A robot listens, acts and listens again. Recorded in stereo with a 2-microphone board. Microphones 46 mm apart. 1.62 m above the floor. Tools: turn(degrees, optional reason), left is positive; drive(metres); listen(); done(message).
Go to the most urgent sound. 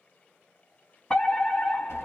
turn(degrees=25, reason="The fire alarm: about 25° left or 155° left.")
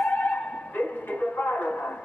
turn(degrees=130, reason="So it is at 130° left.")
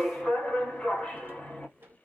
turn(degrees=30, reason="The fire alarm is now 30° left.")
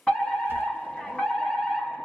turn(degrees=20, reason="The fire alarm is now 20° left.")
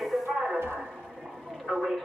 drive(metres=1.0)
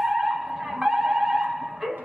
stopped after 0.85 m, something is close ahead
done("Arrived at the fire alarm, straight ahead.")